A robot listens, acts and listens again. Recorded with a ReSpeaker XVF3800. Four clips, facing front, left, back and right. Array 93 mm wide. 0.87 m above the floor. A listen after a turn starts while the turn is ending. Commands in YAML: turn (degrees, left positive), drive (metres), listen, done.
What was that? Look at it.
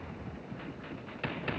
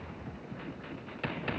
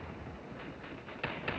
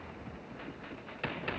listen: true
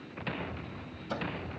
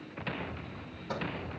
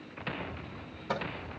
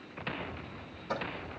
turn: 180
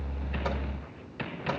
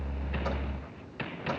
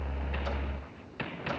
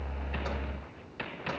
listen: true
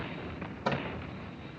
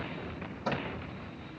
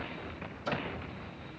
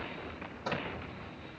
done: "Found it: a microwave, straight ahead."